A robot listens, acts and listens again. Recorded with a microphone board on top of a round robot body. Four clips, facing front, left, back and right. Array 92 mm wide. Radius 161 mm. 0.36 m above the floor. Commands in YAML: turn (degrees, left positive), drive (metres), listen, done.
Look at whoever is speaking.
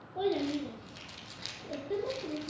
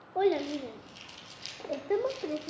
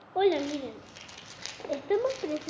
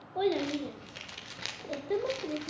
turn: 155
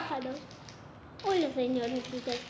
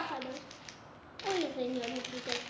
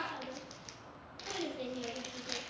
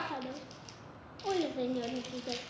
done: "Found it: a child speaking, straight ahead."